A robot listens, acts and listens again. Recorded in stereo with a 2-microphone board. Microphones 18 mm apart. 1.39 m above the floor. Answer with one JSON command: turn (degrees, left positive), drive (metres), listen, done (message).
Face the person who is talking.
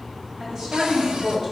{"turn": -50}
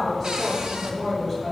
{"done": "Found it: a woman speaking, straight ahead, over 4 m away."}